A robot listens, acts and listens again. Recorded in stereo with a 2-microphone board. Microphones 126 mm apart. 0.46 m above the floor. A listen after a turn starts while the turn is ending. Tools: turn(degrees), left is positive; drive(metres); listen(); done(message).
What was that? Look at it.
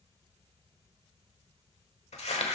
turn(degrees=60)
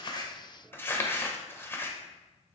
turn(degrees=20)
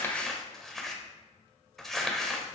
done("Found it: crumpling, straight ahead.")